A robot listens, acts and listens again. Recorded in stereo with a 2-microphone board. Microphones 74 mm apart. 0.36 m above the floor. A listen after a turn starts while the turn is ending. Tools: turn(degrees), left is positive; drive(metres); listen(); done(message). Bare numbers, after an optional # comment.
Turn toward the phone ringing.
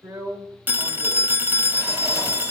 # The phone ringing: about 25° right or 155° right.
turn(-25)
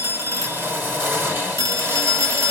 # So it is at 130° right.
turn(-130)
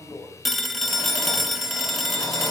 done("Found it: a phone ringing, straight ahead, 1 to 2 m away.")